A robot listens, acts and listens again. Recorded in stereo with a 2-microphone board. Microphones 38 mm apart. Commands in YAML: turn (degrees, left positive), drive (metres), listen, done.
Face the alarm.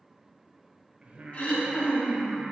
listen: true
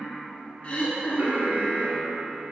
turn: -60
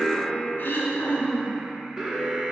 turn: -25
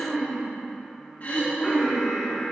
done: "Found it: an alarm, straight ahead, 1 to 2 m away."